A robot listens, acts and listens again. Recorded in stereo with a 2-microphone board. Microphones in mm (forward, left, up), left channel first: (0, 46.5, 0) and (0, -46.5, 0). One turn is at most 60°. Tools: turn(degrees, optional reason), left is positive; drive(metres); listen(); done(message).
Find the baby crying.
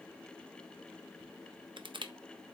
listen()
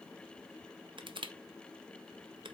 listen()
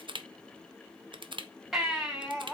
turn(degrees=-30)
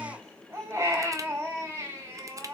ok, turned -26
turn(degrees=-60, reason="So it is at 150° right.")
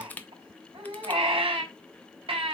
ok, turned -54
turn(degrees=-60, reason="The baby crying is now 95° right.")
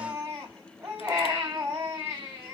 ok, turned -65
turn(degrees=-30, reason="The baby crying is now 30° right.")
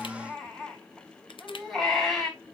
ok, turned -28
done("Facing the baby crying, over 4 m away.")